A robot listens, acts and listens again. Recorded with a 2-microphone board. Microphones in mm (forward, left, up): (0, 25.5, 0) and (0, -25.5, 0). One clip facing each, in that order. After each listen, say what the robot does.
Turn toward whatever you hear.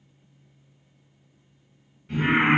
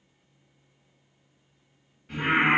Turn 30° left.
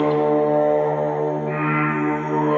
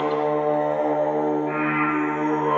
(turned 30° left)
Turn 35° right.
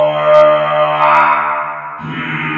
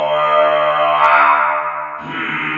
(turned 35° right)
Facing the singing, 1 to 2 m away.